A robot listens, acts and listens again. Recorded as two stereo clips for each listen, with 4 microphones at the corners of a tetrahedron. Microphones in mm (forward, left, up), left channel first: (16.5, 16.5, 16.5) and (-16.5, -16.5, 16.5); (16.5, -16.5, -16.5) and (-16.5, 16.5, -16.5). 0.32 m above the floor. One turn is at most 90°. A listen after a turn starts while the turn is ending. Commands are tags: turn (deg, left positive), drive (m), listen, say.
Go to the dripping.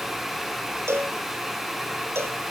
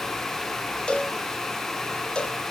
<listen/>
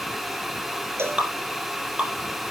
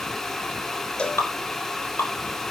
<turn deg="-70"/>
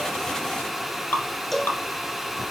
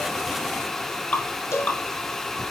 <drive m="1.0"/>
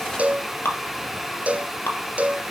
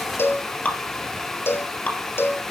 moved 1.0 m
<turn deg="10"/>
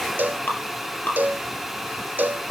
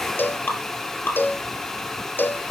<drive m="1.0"/>
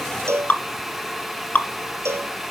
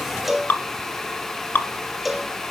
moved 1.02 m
<drive m="1.0"/>
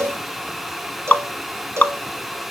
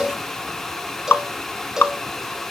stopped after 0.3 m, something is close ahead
<say>Arrived at the dripping, straight ahead.</say>